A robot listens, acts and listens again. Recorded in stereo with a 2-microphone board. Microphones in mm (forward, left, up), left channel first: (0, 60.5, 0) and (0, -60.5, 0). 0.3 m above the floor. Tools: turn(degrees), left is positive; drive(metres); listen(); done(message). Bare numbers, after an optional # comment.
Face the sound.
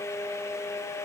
listen()
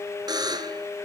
# The buzzer: about 35° right or 145° right.
turn(-35)
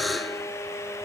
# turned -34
done("Found it: a buzzer, straight ahead, 1 to 2 m away.")